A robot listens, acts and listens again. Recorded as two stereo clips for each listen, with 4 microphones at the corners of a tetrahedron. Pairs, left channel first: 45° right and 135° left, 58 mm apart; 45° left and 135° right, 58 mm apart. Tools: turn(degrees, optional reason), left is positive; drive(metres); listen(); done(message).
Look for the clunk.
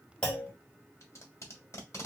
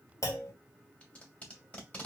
turn(degrees=25, reason="The clunk: 25° left.")
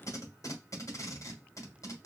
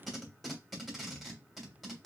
done("Facing where the clunk came from. I can't hear it now.")